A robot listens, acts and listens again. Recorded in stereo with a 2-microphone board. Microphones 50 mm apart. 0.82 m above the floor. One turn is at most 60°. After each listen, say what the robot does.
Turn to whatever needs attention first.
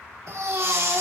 Turn 60° right.
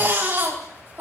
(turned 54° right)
Turn 45° right.
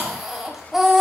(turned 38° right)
Found it: a baby crying, straight ahead, 2 to 4 m away.